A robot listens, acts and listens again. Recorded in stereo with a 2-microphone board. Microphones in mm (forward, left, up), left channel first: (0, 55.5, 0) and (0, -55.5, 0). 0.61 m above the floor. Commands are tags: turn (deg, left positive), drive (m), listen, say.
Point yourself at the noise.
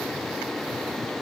<listen/>
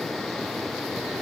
<listen/>
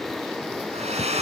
<turn deg="-90"/>
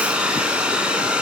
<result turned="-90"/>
<turn deg="-10"/>
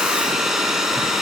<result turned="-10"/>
<say>Facing the hair dryer, over 4 m away.</say>